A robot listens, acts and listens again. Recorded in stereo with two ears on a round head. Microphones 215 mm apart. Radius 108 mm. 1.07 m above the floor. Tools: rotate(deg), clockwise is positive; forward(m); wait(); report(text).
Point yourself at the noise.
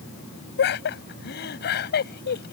rotate(-40)
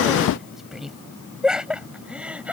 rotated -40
report("Facing the laughter.")